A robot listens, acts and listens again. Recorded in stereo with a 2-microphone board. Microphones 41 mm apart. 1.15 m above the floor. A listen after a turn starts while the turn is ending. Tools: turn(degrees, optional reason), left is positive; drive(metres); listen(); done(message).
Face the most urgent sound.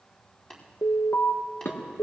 turn(degrees=70, reason="The alarm: about 70° left or 110° left.")
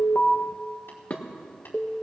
done("Found it: an alarm, straight ahead, under 1 m away.")